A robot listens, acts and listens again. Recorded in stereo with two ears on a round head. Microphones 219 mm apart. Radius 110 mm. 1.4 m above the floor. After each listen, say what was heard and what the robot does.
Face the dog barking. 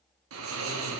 Keep listening.
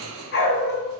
The dog barking: about 45° left or 135° left. Turn 45° left.
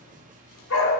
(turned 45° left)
So it is at 80° left. Turn 80° left.
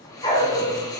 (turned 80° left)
The dog barking is now 25° left. Turn 25° left.
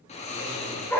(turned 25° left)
The dog barking is now 10° left. Turn 10° left.
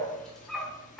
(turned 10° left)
Found it: a dog barking, straight ahead.